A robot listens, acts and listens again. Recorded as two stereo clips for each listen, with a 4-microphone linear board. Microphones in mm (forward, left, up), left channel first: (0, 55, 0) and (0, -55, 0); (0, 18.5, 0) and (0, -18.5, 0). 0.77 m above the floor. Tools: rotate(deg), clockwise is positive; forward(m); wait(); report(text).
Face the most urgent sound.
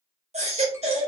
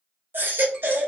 rotate(75)
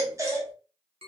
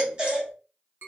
rotate(30)
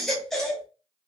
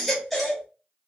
report("Found it: a baby crying, straight ahead.")